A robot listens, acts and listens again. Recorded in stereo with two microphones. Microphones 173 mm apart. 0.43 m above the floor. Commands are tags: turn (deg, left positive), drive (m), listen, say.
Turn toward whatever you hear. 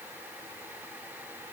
<listen/>
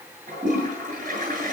<turn deg="-50"/>
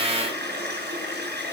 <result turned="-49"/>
<turn deg="-80"/>
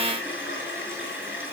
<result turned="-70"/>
<turn deg="-10"/>
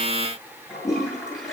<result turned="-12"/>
<say>Facing the toilet flushing.</say>